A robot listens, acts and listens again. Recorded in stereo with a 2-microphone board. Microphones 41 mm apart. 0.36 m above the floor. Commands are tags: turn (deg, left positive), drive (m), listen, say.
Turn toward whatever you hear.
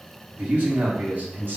<turn deg="-55"/>
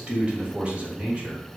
<turn deg="-35"/>
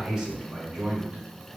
<turn deg="-30"/>
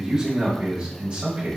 <turn deg="-35"/>
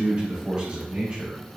<turn deg="-30"/>
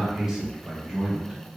<turn deg="-15"/>
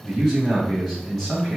<say>Facing the man speaking.</say>